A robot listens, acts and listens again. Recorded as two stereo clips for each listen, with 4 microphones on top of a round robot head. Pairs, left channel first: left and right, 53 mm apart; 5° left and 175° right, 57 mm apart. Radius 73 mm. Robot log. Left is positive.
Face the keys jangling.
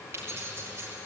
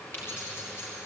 note: The keys jangling: 50° right.
cmd yaw -50
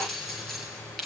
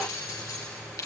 end: Facing the keys jangling.